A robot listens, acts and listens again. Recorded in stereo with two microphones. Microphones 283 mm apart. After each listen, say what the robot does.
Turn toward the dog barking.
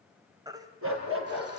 Turn 45° right.
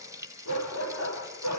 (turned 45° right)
Turn 85° right.
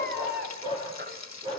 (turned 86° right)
Turn 20° right.
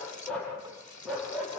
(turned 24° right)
Facing the dog barking.